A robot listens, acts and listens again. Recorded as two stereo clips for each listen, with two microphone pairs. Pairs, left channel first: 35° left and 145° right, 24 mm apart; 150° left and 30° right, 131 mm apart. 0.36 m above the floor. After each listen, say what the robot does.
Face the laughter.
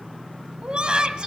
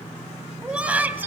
Turn 105° right.
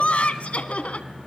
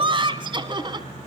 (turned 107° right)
Turn 20° left.
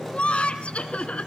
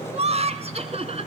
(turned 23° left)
Found it: laughter, straight ahead.